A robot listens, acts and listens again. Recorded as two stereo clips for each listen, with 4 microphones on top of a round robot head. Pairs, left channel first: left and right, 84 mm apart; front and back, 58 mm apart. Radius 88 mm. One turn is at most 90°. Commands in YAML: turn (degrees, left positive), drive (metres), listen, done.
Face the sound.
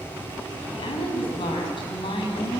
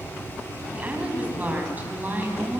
turn: 90
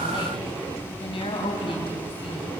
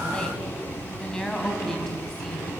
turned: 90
turn: 80
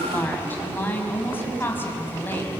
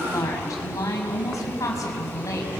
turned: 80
turn: 25
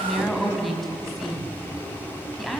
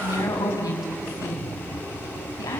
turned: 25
done: "Facing the woman speaking, over 4 m away."